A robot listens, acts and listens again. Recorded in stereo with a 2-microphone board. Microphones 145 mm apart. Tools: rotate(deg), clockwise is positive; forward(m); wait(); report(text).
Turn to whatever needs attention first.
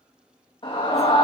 rotate(-40)
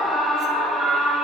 report("Found it: a scream, straight ahead.")